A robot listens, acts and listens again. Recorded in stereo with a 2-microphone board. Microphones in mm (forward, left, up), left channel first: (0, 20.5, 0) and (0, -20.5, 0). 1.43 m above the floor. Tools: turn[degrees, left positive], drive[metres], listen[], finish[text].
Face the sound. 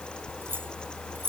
Thought: The keys jangling: about 55° right or 125° right.
Action: turn[-55]
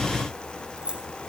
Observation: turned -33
Thought: So it is at 20° right.
Action: turn[-20]
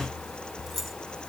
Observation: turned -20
Action: finish[Found it: keys jangling, straight ahead.]